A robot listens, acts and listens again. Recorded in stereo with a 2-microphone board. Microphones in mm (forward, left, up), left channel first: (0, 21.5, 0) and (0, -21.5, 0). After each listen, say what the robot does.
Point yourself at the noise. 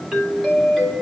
Turn 30° left.
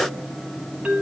Turn 25° right.
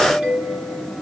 Turn 15° right.
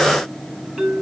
Found it: a doorbell, straight ahead.